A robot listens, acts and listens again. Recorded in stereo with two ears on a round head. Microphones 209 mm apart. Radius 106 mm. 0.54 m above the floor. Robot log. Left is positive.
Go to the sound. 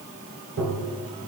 note: The tapping: about 60° right or 120° right.
cmd yaw -60
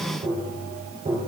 note: So it is at 30° right.
cmd yaw -30
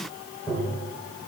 note: The tapping is now 10° left.
cmd yaw +10
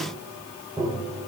cmd fwd 1.0
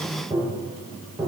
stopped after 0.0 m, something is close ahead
end: Blocked. The tapping is further on, straight ahead.